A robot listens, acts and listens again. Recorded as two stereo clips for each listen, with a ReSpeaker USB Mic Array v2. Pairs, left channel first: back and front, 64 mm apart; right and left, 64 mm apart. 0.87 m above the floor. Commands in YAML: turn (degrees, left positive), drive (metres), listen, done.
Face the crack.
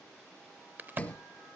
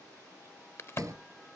turn: -50
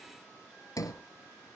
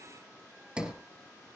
done: "I heard a crack from this way, but can't make it out now."